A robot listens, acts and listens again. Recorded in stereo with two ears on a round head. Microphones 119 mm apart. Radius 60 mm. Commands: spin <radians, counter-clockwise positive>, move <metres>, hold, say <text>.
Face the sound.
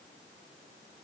hold
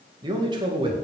spin -0.70
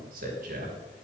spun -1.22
spin -1.05
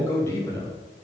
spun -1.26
spin 0.35
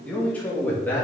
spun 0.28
spin 0.26
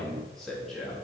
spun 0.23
say Facing the man speaking, 2 to 4 m away.